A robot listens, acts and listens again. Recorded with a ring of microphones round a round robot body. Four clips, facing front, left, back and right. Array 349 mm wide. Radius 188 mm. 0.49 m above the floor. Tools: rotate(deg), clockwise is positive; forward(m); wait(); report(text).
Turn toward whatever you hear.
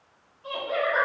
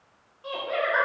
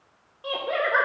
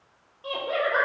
rotate(160)
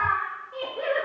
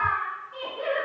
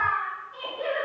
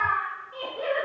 report("Facing the laughter, 1 to 2 m away.")